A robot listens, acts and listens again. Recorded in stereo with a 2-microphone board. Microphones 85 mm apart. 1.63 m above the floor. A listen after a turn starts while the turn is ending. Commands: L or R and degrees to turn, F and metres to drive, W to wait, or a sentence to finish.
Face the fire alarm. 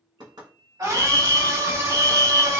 L35
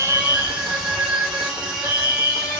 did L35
L105
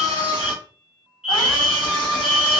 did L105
R10
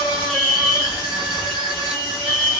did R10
Found it: a fire alarm, straight ahead, under 1 m away.